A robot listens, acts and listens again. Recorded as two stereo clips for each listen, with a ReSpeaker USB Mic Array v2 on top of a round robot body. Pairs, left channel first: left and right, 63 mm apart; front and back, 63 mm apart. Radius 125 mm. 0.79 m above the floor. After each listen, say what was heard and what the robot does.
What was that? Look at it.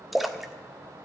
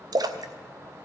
The splash: 175° right. Turn 175° right.
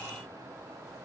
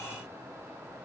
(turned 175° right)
Facing where the splash came from. I can't hear it now.